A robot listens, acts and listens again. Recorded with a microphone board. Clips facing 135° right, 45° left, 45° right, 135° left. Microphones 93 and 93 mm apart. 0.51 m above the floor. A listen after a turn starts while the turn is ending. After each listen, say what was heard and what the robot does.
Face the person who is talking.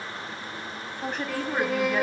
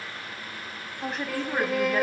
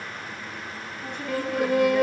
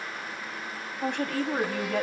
The woman speaking: 135° left. Turn 135° left.
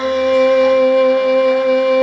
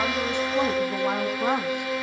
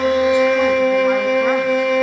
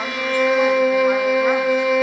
Keep listening.
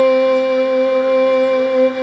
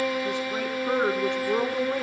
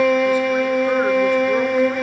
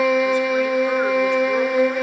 Keep listening.
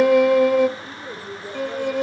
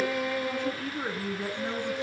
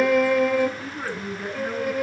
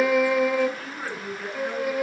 The woman speaking is now 35° left. Turn 35° left.
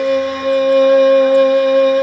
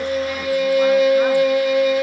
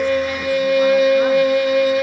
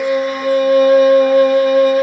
Keep listening.
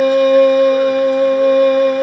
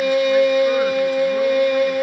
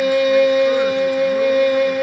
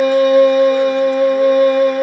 Keep listening.
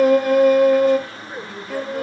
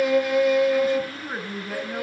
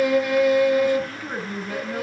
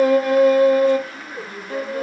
Facing the woman speaking, over 4 m away.